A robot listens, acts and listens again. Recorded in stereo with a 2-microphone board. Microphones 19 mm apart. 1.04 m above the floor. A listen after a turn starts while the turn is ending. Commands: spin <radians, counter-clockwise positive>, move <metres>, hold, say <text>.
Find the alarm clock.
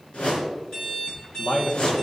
spin 0.61
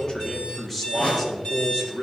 spin 1.92
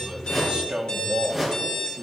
spin 0.79
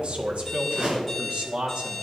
spin -0.17
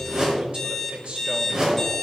say Facing the alarm clock.